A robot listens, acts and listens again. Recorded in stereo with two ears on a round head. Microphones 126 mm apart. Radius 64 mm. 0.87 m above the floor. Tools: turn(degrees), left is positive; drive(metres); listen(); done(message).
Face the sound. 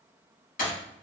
turn(degrees=70)
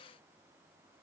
listen()
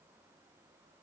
done("I heard breaking glass, but can't make it out now. It was about straight ahead or 40° left.")